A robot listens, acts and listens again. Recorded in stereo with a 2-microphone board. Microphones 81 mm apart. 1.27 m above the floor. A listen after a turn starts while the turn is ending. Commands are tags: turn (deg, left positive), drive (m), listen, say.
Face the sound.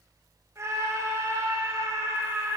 <turn deg="-40"/>
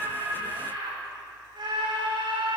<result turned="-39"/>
<turn deg="-100"/>
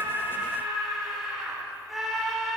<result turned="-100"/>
<say>Facing the scream.</say>